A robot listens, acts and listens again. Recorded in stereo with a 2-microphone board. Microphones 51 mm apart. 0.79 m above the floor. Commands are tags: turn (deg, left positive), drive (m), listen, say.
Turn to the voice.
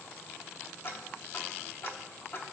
<listen/>
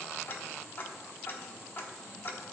<listen/>
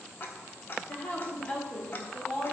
<turn deg="20"/>
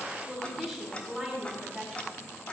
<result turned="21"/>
<say>Found it: a woman speaking, straight ahead.</say>